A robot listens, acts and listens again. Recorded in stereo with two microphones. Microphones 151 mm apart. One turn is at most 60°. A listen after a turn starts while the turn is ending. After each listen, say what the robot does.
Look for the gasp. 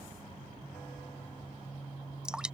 Keep listening.
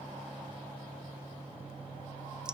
Keep listening.
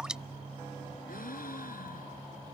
Turn 60° left.
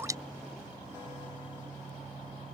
Turn 30° left.
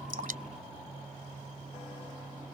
Facing where the gasp came from. I can't hear it now.